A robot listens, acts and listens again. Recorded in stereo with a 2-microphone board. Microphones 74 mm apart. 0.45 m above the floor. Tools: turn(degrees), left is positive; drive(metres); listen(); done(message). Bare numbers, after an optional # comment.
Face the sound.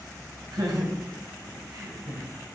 # The laughter: about 60° right or 120° right.
turn(-60)
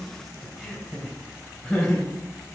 # So it is at 10° left.
turn(10)
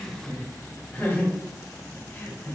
# The laughter is now 15° left.
turn(15)
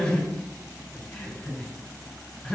done("Found it: laughter, straight ahead.")